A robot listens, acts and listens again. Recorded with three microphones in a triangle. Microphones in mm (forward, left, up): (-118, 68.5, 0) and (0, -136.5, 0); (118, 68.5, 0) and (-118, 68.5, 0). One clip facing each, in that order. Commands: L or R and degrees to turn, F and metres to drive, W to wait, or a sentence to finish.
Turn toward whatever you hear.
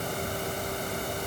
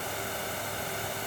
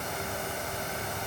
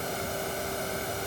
W
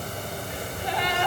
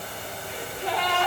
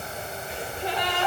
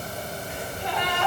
R55
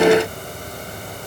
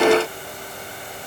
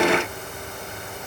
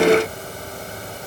I heard a gasp from this way, but can't make it out now.